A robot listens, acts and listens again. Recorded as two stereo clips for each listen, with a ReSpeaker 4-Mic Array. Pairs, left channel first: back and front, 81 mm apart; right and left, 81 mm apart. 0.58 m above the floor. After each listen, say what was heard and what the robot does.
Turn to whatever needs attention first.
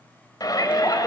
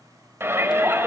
The shout: 145° left. Turn 145° left.
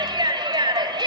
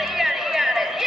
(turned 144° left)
Found it: a shout, straight ahead.